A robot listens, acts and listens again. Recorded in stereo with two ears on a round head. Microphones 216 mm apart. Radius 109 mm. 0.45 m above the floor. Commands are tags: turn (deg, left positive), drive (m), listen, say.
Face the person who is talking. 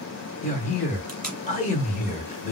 <turn deg="30"/>
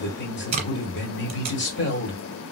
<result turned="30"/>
<turn deg="115"/>
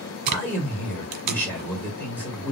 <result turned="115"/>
<turn deg="10"/>
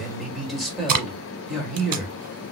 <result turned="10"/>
<say>Facing the man speaking, 1 to 2 m away.</say>